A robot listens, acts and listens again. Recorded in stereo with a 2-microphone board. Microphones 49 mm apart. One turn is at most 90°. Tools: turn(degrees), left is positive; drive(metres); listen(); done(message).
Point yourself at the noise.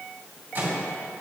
turn(degrees=-40)
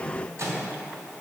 turn(degrees=-90)
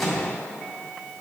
done("Found it: a microwave, straight ahead.")